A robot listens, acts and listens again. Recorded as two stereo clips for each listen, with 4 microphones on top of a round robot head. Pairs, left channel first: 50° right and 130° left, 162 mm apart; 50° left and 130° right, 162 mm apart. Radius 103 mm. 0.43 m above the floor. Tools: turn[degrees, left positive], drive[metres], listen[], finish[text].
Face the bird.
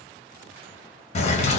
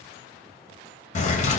Action: finish[Found it: a bird, straight ahead.]